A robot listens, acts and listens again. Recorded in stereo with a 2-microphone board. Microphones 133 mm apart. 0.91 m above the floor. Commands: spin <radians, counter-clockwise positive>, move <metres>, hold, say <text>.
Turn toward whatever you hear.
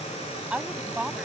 spin -0.52
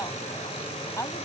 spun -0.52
spin 0.35
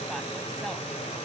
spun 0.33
hold
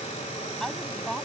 say Facing the woman speaking.